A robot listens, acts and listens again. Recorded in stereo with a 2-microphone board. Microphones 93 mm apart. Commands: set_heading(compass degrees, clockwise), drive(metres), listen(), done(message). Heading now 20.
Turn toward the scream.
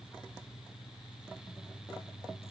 listen()
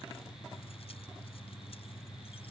listen()
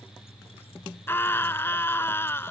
set_heading(355)
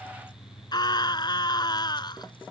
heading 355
set_heading(220)
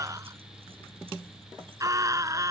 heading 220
set_heading(255)
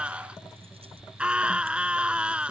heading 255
set_heading(265)
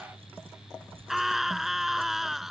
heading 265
done("Facing the scream.")